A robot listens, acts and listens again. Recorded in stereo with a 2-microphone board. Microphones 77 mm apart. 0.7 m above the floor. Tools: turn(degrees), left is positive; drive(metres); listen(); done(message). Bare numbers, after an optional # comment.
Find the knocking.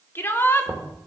# The knocking: about 30° right or 150° right.
turn(-30)
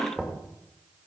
done("Facing the knocking.")